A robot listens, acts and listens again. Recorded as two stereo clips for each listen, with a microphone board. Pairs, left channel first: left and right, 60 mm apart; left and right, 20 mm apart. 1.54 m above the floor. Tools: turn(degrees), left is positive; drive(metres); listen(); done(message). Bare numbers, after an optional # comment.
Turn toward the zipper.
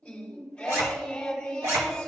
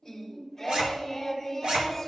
# The zipper: about 50° right or 130° right.
turn(-50)
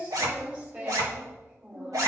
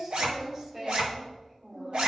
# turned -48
# So it is at 75° right.
turn(-75)
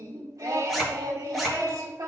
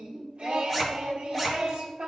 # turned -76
done("Facing the zipper.")